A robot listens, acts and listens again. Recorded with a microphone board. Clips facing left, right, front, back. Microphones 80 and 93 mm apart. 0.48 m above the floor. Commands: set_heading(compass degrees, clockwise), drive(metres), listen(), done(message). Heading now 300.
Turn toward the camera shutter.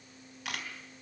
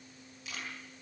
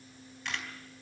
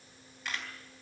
set_heading(205)
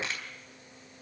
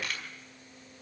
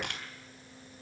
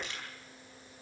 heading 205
set_heading(180)
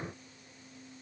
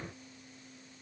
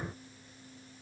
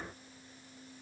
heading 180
done("Found it: a camera shutter, straight ahead, 2 to 4 m away.")